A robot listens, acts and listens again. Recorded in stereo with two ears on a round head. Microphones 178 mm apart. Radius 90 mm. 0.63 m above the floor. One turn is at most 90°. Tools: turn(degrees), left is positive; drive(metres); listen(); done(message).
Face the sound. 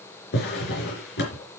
turn(degrees=55)
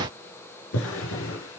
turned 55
turn(degrees=70)
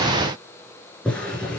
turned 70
done("Facing the drawer, 2 to 4 m away.")